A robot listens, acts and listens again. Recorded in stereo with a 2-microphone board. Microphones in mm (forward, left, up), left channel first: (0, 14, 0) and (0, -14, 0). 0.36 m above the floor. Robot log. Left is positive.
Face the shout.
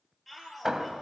cmd yaw +30
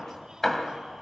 cmd idle
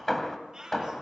note: So it is at 15° right.
cmd yaw -15
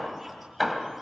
cmd idle
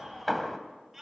end: Found it: a shout, straight ahead.